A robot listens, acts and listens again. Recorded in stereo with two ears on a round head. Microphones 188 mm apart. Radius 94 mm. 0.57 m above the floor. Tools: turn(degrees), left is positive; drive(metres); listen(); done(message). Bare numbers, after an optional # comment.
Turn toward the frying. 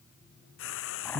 # The frying: about 70° left or 110° left.
turn(70)
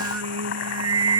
listen()
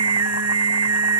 listen()
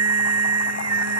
done("I heard frying, but can't make it out now. It was about straight ahead or 40° left.")